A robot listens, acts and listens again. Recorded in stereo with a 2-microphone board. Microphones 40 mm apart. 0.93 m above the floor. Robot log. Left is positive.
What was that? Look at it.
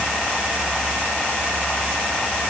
cmd idle
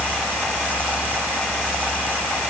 cmd idle
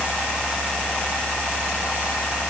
end: I can't make out anything.